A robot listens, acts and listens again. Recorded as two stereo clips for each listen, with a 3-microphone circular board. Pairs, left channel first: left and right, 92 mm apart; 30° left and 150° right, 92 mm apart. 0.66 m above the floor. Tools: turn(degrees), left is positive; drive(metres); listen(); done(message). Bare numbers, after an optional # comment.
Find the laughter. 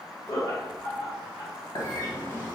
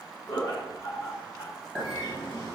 # The laughter: 65° left.
turn(65)
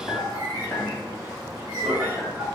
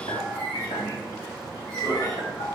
# The laughter is now 10° right.
turn(-10)
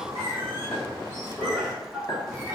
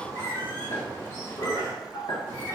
done("Facing the laughter, 1 to 2 m away.")